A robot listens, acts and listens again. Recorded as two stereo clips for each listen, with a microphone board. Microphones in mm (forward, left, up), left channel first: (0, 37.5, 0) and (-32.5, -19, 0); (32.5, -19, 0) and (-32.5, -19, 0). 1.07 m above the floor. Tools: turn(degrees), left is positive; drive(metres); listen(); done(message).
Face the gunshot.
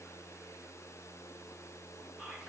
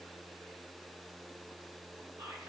listen()
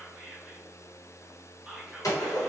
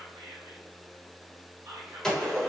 turn(degrees=80)
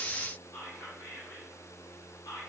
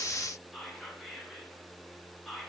done("Facing where the gunshot came from. I can't hear it now.")